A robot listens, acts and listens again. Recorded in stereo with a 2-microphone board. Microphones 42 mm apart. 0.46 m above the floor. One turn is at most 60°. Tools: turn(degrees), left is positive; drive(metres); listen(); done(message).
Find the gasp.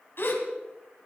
turn(degrees=60)
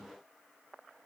listen()
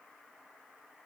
done("I heard a gasp, but can't make it out now. It was about straight ahead or 60° left.")